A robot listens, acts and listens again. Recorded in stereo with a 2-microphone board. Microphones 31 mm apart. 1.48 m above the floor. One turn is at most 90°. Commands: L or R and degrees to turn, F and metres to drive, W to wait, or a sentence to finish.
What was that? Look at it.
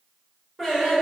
R30
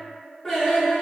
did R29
L30
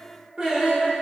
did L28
R40
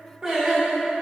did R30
R30
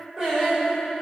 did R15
R25
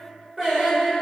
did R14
R15
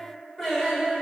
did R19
Found it: singing, straight ahead.